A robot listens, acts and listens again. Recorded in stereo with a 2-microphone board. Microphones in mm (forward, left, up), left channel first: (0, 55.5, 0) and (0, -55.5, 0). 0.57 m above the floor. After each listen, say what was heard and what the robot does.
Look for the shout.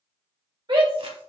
The shout: about 45° right or 135° right. Turn 45° right.
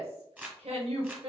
So it is at 80° right. Turn 80° right.
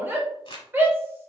The shout is now 20° right. Turn 20° right.
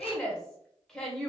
Facing the shout, 1 to 2 m away.